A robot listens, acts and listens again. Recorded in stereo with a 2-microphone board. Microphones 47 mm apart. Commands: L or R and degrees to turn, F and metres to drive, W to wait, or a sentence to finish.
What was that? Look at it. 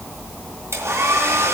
R70
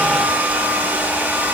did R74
R35
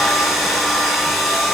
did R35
Found it: a hair dryer, straight ahead.